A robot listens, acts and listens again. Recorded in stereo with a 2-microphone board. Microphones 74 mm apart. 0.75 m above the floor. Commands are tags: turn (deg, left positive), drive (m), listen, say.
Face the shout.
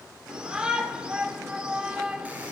<turn deg="-30"/>
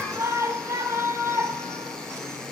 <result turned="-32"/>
<turn deg="-135"/>
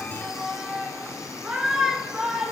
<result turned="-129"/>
<turn deg="-10"/>
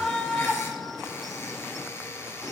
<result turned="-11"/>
<say>Facing the shout.</say>